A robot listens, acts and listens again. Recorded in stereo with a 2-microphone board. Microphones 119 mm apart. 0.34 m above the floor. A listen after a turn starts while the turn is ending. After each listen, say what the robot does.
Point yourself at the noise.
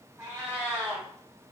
Turn 15° right.
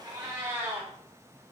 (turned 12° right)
Turn 155° right.
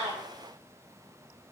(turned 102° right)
Turn 50° right.
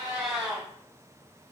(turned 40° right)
Found it: a cat meowing, straight ahead, 1 to 2 m away.